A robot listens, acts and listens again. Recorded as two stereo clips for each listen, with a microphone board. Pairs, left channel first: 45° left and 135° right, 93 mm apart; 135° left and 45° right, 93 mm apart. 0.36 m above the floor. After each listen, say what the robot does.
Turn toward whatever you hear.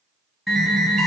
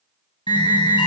Turn 135° left.
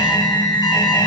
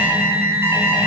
Turn 15° left.
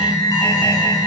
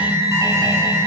Facing the alarm.